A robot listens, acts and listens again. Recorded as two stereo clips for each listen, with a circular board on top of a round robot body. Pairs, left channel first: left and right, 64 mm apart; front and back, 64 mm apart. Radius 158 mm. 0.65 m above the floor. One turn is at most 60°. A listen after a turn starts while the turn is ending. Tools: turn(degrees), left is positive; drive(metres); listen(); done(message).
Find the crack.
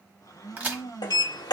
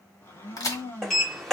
turn(degrees=-25)
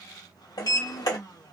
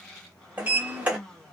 done("Facing where the crack came from. I can't hear it now.")